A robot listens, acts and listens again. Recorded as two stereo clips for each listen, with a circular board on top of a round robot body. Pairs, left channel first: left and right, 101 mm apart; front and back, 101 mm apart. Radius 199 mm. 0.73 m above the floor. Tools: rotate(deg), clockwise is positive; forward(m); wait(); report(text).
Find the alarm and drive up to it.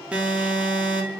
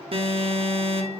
rotate(170)
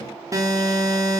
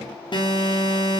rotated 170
rotate(35)
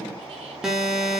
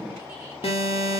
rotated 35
rotate(10)
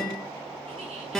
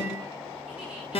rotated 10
forward(1.0)
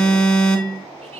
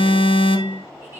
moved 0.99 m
rotate(-10)
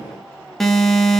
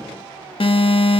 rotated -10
forward(1.0)
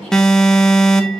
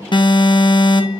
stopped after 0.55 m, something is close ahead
report("I am next to the alarm.")